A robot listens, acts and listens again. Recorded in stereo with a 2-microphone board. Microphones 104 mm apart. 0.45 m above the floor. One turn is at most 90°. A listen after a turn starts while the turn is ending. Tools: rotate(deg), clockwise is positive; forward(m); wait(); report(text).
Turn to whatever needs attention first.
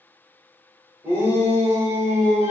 rotate(20)
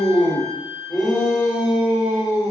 report("Found it: a shout, straight ahead.")